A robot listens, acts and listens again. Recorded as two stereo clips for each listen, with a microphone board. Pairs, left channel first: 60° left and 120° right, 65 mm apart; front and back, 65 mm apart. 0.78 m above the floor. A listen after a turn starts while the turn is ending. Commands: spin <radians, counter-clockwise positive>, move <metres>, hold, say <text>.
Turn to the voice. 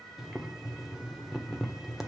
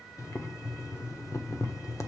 hold
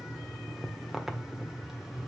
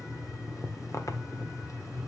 hold
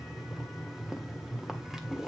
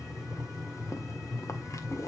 say I can't make out anyone speaking, only boiling.